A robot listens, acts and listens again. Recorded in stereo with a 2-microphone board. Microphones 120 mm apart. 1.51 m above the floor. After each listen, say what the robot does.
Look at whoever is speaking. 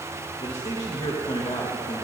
Turn 65° left.
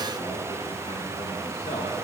Turn 50° left.
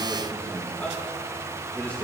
Turn 15° left.
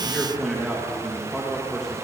Facing the man speaking.